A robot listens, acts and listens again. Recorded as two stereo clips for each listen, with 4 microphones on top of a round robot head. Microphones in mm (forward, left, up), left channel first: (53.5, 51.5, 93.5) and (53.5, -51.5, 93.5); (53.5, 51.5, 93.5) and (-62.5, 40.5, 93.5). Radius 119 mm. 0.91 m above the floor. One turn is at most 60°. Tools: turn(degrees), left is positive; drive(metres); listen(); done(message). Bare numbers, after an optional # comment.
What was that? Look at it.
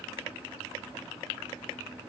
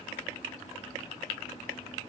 listen()
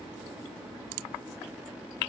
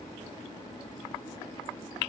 listen()
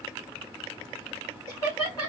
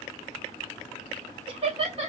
# The laughter: 150° left.
turn(60)
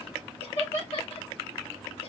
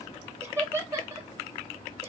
# The laughter is now 120° left.
turn(60)
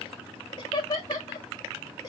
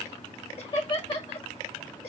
# The laughter is now 40° left.
turn(40)
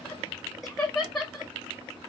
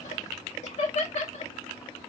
done("Found it: laughter, straight ahead.")